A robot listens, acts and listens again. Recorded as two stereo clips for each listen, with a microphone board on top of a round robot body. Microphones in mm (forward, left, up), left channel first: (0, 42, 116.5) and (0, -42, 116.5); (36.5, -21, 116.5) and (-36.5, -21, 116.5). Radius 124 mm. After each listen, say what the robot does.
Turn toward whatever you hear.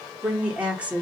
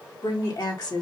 Turn 10° right.
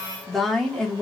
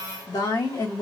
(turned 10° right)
Turn 10° left.
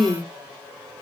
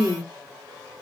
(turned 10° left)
Turn 10° left.
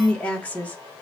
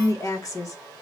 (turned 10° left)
Turn 25° left.
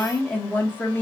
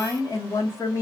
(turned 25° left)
Turn 30° left.
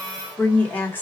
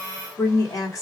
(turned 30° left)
Turn 30° left.
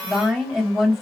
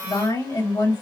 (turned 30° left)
Found it: a woman speaking, straight ahead, 1 to 2 m away.